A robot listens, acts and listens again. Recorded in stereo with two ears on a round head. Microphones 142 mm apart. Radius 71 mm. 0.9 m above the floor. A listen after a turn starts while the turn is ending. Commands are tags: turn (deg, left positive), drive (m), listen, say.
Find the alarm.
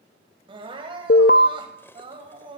<turn deg="60"/>
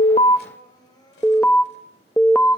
<turn deg="10"/>
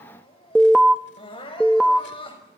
<say>Facing the alarm, under 1 m away.</say>